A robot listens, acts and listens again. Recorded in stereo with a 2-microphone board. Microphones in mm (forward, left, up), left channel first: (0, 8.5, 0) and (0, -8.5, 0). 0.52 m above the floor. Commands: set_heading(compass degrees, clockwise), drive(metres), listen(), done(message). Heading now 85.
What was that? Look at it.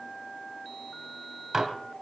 set_heading(110)
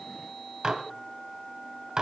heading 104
set_heading(239)
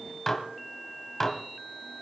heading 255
set_heading(235)
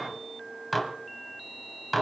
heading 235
done("Facing the dishes clattering.")